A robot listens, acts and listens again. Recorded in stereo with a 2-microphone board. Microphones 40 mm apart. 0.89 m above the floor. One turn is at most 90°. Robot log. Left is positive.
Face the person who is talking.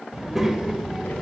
cmd yaw -30
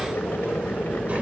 note: So it is at 145° right.
cmd yaw -90
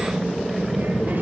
note: The child speaking is now 55° right.
cmd yaw -55
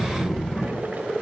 end: Facing the child speaking, 2 to 4 m away.